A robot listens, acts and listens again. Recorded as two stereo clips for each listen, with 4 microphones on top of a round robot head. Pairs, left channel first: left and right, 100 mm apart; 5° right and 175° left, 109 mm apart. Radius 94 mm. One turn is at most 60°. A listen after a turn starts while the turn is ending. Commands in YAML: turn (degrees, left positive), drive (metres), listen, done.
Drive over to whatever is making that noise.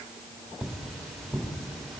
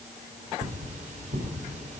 turn: 60
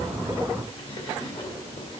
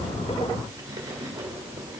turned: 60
turn: 60
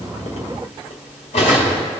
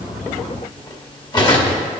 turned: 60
turn: 45
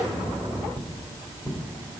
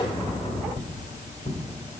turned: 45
turn: -15
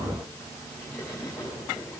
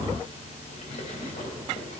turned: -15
listen: true
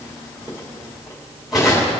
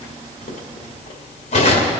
drive: 1.0
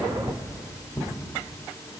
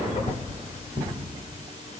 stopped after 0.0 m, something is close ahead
done: "Blocked. The cutlery clinking is further on, straight ahead."